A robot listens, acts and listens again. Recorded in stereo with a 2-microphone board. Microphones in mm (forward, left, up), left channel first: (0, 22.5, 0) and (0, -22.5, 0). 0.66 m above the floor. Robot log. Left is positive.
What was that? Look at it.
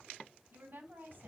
note: The woman speaking: about 50° right or 130° right.
cmd yaw -50
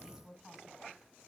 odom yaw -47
note: So it is at 10° right.
cmd yaw -10
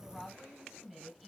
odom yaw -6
end: Found it: a woman speaking, straight ahead.